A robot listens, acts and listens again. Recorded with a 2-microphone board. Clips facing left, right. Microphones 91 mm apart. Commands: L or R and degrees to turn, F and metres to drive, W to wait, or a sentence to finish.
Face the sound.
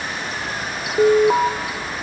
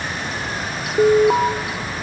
L30
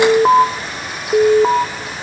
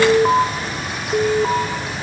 L155
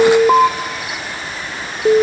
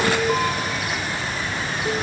L85
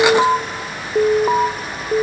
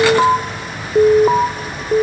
Found it: an alarm, straight ahead, 1 to 2 m away.